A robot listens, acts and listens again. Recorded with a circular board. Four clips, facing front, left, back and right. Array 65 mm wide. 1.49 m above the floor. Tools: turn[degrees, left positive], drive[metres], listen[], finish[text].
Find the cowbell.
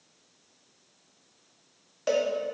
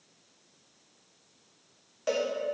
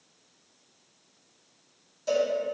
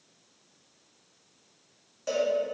Thought: The cowbell: 20° left.
Action: turn[20]
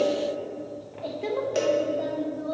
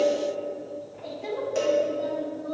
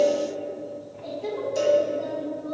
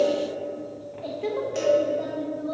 Action: finish[Found it: a cowbell, straight ahead, 1 to 2 m away.]